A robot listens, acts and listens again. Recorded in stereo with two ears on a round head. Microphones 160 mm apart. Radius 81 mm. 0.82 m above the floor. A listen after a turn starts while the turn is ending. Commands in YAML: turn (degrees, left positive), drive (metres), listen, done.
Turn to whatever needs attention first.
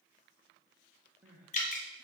turn: -30
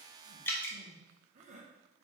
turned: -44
turn: -130
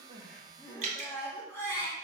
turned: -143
turn: 15
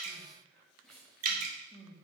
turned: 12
done: "Found it: crying, straight ahead."